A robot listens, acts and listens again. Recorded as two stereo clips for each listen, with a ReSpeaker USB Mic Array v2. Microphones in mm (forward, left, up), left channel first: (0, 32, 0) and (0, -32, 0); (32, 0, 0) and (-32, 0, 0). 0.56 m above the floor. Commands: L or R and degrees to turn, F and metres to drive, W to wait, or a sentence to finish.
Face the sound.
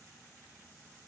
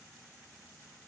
W
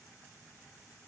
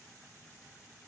W
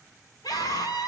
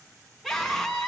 L95
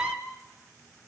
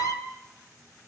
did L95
R20
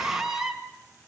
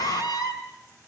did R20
Found it: a scream, straight ahead, over 4 m away.